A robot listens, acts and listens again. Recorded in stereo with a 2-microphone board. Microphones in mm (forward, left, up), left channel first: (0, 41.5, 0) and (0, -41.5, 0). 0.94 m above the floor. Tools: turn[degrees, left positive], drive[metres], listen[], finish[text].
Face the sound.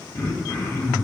Thought: The throat clearing: about 35° left or 145° left.
Action: turn[35]
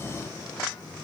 Action: listen[]
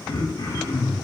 Thought: So it is at 105° left.
Action: turn[105]
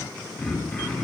Thought: The throat clearing is now 10° left.
Action: turn[10]
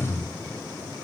Action: finish[Found it: throat clearing, straight ahead, 1 to 2 m away.]